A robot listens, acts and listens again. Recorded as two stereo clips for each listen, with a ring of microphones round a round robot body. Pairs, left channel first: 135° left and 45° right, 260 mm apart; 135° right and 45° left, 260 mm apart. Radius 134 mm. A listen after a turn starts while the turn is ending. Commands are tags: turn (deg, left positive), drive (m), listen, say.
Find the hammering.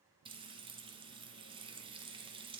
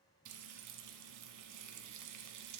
<listen/>
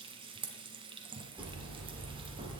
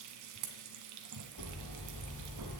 <turn deg="-125"/>
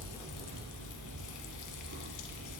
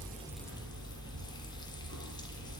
<say>Found it: hammering, straight ahead, 2 to 4 m away.</say>